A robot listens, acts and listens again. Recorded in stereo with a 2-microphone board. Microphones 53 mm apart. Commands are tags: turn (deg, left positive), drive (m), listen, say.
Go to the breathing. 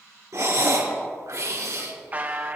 <turn deg="-70"/>
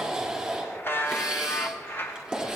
<turn deg="-10"/>
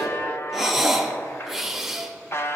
<drive m="1.0"/>
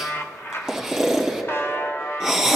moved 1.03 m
<drive m="1.0"/>
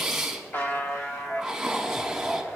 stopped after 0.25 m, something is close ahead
<turn deg="-10"/>
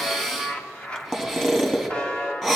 <say>I am next to the breathing.</say>